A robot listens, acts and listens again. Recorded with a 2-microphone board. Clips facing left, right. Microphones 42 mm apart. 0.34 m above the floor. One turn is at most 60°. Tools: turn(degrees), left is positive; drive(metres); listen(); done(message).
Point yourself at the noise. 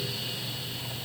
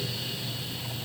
listen()
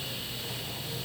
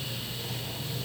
listen()
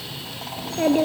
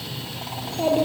turn(degrees=60)
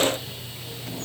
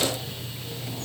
turn(degrees=30)
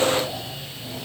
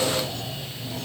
listen()
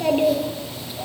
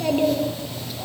turn(degrees=15)
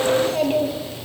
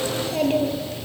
done("Found it: a child speaking, straight ahead, over 4 m away.")